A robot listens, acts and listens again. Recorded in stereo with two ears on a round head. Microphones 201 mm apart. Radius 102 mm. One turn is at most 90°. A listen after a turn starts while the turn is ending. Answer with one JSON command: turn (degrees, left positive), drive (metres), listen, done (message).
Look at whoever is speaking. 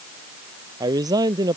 {"turn": -15}
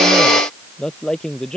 {"done": "Facing the man speaking."}